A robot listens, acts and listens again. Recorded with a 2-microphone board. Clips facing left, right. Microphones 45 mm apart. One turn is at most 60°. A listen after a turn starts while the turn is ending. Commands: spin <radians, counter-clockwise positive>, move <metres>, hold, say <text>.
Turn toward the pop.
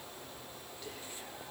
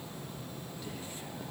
hold
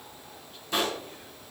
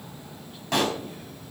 spin -1.05
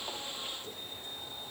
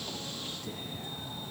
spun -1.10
hold
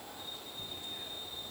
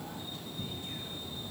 say I heard a pop, but can't make it out now. It was about straight ahead or 55° right.